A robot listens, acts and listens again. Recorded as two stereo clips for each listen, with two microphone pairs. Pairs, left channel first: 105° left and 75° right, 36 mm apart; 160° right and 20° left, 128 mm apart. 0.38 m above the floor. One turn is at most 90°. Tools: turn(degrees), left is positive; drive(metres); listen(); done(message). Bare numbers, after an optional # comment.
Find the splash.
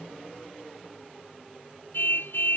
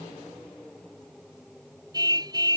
listen()
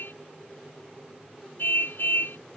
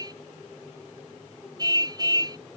listen()
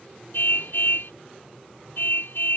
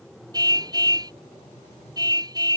done("I can't make out a splash to turn to.")